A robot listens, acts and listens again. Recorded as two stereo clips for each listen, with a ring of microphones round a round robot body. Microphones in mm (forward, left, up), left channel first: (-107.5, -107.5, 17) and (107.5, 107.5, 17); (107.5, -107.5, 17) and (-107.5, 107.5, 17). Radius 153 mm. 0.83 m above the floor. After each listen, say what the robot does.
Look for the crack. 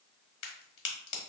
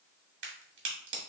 Turn 170° right.
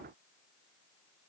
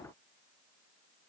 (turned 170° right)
Facing where the crack came from. I can't hear it now.